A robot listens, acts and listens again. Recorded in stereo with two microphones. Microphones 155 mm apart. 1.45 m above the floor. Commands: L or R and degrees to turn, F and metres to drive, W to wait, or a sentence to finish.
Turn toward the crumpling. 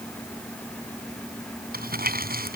R70
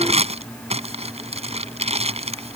R40
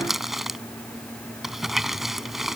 Found it: crumpling, straight ahead.